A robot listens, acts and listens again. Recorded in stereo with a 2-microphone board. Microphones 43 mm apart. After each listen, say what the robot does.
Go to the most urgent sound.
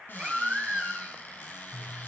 Turn 20° right.
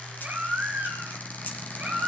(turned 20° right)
Turn 140° right.
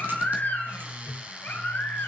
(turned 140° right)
Turn 45° left.
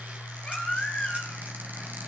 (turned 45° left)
Turn 20° left.
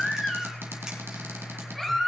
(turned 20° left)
Drive 1.0 m forward.
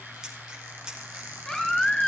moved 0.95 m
Turn 10° left.
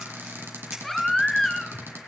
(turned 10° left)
Drive 1.0 m forward.
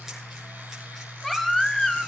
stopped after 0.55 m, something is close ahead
I am next to the baby crying.